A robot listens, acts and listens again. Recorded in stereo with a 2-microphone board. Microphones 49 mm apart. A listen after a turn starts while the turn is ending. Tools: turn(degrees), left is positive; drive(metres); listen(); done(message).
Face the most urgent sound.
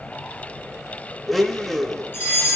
turn(degrees=50)
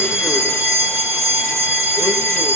turn(degrees=80)
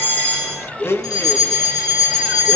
turn(degrees=10)
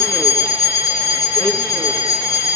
done("Found it: a fire alarm, straight ahead, over 4 m away.")